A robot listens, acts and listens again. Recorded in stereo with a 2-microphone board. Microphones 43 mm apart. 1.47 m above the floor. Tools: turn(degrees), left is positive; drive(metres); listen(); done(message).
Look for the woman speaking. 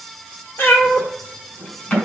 listen()
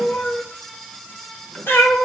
listen()
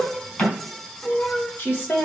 turn(degrees=50)
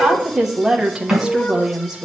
turn(degrees=-15)
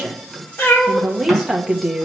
done("Facing the woman speaking.")